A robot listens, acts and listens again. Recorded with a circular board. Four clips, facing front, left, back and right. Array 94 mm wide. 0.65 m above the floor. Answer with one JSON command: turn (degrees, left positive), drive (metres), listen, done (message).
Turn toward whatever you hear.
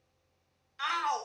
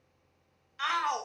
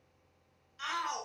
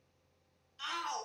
{"turn": 60}
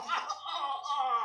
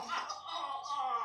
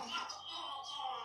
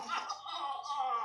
{"done": "Facing the shout."}